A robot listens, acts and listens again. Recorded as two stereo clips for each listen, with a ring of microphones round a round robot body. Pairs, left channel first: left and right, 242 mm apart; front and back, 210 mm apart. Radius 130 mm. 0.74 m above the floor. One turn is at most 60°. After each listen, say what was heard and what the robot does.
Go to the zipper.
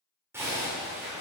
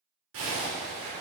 The zipper: 170° right. Turn 60° right.
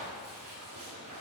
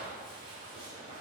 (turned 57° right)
The zipper is now 110° right. Turn 60° right.
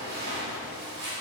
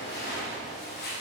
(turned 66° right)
The zipper is now 45° right. Turn 45° right.
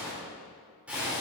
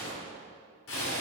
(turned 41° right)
Drive 1.0 m forward.
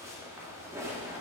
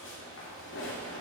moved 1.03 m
The zipper is now 10° right. Turn 10° right.
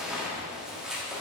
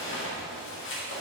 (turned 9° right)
Drive 1.0 m forward.
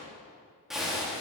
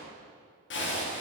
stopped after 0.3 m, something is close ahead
I am next to the zipper.